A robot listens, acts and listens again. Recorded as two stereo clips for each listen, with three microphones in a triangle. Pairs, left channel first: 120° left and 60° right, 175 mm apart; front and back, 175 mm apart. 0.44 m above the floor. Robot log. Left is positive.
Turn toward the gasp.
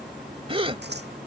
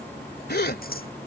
end: Found it: a gasp, straight ahead.